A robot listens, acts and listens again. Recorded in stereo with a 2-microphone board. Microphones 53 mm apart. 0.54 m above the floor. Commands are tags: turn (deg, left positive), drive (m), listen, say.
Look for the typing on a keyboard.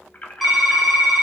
<turn deg="-30"/>
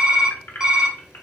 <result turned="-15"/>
<turn deg="-165"/>
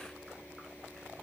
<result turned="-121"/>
<turn deg="-40"/>
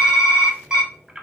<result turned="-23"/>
<turn deg="-20"/>
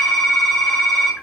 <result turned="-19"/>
<say>Found it: typing on a keyboard, straight ahead, 1 to 2 m away.</say>